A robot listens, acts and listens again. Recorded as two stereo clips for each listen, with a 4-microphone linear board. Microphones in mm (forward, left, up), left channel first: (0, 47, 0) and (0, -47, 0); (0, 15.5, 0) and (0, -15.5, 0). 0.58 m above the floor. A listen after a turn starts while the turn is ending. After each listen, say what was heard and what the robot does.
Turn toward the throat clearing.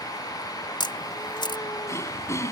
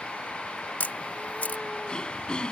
The throat clearing: about 30° left or 150° left. Turn 30° left.
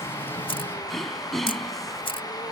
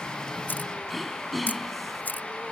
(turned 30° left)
Found it: throat clearing, straight ahead.